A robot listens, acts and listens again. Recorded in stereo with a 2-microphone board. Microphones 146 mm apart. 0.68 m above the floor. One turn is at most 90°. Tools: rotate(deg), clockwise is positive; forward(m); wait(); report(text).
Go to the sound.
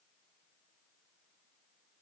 wait()
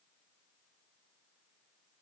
wait()
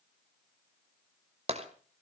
rotate(45)
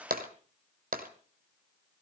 rotate(90)
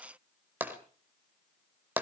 rotate(15)
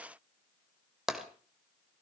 forward(1.0)
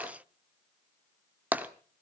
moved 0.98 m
rotate(10)
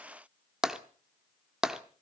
forward(1.0)
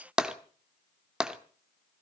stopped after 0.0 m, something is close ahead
report("Arrived at the tapping, straight ahead.")